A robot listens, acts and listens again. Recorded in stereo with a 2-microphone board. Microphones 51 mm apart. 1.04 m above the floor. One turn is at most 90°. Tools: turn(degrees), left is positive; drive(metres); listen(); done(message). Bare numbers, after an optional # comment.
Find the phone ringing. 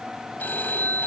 # The phone ringing: about 30° left or 150° left.
turn(30)
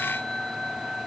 done("Found it: a phone ringing, straight ahead.")